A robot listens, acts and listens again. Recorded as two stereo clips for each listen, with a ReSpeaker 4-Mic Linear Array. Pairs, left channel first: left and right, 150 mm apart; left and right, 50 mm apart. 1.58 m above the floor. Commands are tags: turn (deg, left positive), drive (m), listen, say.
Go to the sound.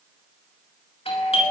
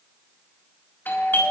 <turn deg="40"/>
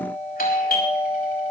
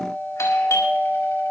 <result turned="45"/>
<turn deg="95"/>
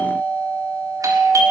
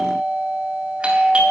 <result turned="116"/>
<turn deg="-25"/>
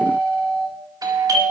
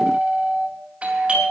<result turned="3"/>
<turn deg="-25"/>
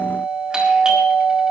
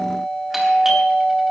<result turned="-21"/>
<drive m="1.0"/>
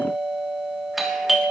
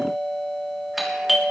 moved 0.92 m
<drive m="1.0"/>
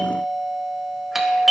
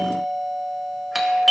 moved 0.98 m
<drive m="1.0"/>
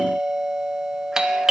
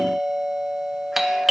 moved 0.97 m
<drive m="1.0"/>
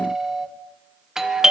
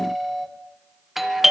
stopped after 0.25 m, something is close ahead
<say>I am next to the doorbell.</say>